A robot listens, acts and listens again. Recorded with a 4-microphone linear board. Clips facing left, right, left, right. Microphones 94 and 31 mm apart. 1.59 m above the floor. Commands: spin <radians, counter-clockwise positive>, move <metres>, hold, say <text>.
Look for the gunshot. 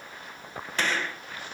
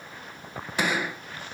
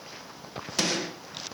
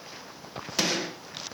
spin -0.52
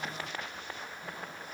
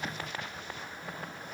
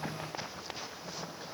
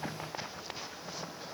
hold
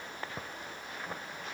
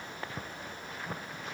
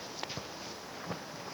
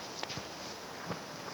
say I heard a gunshot, but can't make it out now. It was about 20° left or 140° right.